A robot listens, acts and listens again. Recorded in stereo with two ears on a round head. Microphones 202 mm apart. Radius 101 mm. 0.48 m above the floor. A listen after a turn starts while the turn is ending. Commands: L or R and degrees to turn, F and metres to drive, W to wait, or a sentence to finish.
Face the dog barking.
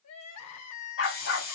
L65
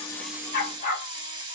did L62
L40
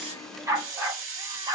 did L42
R25
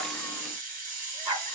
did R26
R10
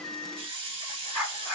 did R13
Found it: a dog barking, straight ahead.